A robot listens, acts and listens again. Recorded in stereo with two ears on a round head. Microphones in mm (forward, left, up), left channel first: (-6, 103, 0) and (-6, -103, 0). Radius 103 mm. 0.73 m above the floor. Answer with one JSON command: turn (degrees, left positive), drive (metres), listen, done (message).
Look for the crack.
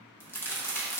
{"turn": 30}
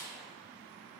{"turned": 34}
{"listen": true}
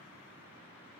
{"done": "I heard a crack, but can't make it out now. It was about 25° right or 135° left."}